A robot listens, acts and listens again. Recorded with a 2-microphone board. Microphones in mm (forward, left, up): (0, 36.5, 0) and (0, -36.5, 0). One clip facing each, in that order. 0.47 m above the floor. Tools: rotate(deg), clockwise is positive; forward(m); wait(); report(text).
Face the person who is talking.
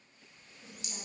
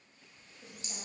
wait()
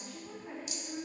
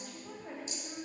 rotate(70)
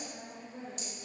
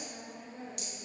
rotate(15)
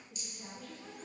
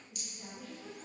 report("Facing the woman speaking, over 4 m away.")